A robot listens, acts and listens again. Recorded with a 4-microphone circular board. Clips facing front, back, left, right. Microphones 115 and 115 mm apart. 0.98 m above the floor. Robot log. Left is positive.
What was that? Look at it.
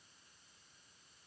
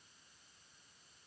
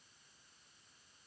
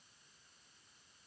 cmd idle
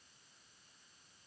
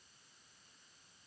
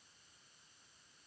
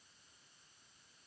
cmd idle
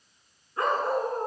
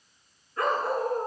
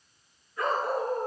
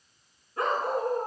note: The dog barking: 60° right.
cmd yaw -60
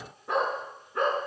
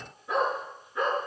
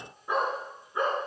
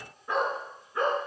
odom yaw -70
note: The dog barking is now 15° left.
cmd yaw +15
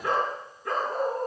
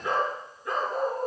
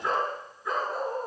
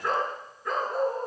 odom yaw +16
end: Found it: a dog barking, straight ahead.